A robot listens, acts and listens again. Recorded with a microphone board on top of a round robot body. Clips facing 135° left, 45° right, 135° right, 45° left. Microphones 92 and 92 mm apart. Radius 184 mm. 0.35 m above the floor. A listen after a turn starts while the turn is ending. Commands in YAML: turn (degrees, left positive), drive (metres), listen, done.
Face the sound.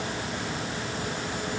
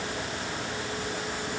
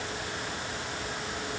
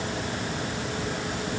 listen: true
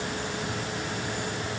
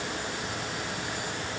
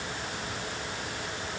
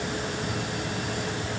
listen: true
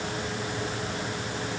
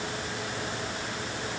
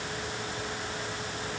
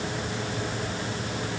done: "I can't make out anything to turn to."